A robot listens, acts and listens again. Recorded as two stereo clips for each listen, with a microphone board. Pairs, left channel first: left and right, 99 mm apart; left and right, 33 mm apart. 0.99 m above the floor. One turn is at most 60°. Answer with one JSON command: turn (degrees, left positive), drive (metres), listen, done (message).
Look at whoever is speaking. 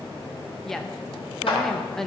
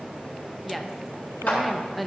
{"turn": 30}
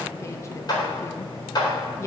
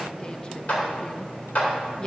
{"turn": 60}
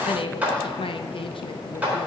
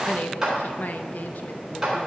{"turn": 60}
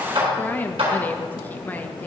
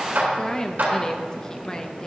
{"turn": 20}
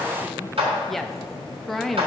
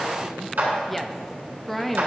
{"done": "Found it: a woman speaking, straight ahead, under 1 m away."}